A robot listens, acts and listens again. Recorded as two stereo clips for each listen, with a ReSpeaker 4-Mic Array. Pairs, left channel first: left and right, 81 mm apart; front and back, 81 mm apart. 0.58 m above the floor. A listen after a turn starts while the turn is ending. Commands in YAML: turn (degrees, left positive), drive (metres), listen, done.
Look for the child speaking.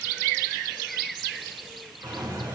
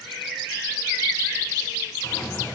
listen: true
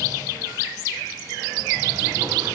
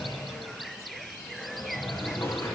listen: true
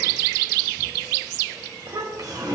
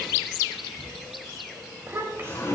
turn: -125
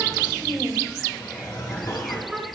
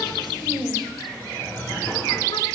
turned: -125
done: "Facing the child speaking."